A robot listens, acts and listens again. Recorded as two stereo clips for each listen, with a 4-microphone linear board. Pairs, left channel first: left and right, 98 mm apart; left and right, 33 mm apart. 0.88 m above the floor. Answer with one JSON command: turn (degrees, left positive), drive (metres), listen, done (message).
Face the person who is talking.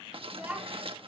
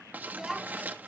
{"turn": -30}
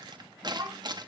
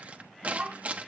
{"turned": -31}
{"turn": -140}
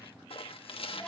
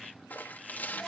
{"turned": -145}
{"done": "Found it: a child speaking, straight ahead."}